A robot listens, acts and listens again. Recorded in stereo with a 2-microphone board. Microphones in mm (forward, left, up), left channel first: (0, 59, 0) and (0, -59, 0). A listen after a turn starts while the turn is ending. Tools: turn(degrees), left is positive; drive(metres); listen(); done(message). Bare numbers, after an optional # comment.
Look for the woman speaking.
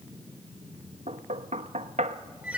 listen()
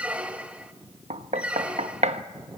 listen()
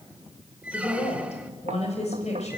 # The woman speaking: about 75° left or 105° left.
turn(75)
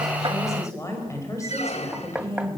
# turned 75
# So it is at 25° left.
turn(25)
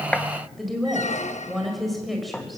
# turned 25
done("Facing the woman speaking, over 4 m away.")